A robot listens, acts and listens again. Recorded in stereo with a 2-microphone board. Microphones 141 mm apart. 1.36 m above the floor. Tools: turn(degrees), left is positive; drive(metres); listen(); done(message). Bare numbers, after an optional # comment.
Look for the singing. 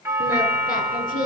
turn(90)
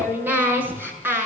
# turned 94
# So it is at 15° right.
turn(-15)
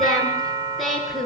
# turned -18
done("Found it: singing, straight ahead, over 4 m away.")